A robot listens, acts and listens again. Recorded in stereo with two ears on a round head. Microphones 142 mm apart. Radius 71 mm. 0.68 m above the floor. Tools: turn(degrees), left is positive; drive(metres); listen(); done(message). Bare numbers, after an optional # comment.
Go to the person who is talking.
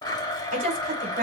# The woman speaking: about 45° right or 135° right.
turn(-45)
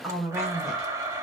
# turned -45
drive(1.0)
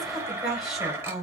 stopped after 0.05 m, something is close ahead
done("Blocked. The woman speaking is further on, straight ahead.")